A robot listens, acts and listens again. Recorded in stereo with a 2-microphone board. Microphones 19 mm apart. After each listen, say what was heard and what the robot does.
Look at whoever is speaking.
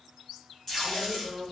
The woman speaking: about 25° right or 155° right. Turn 25° right.
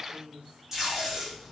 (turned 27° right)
So it is at 125° right. Turn 125° right.
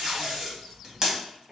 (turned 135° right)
The woman speaking is now 10° left. Turn 10° left.
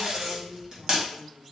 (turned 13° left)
Found it: a woman speaking, straight ahead, 1 to 2 m away.